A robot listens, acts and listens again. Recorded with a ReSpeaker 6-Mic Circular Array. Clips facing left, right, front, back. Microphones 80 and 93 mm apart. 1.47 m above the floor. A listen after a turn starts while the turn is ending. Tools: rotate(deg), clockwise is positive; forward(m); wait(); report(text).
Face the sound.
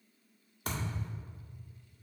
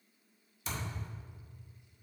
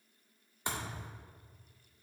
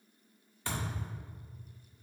rotate(-65)
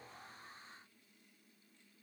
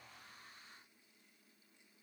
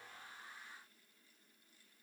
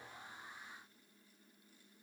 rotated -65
report("I heard a thud from this way, but can't make it out now.")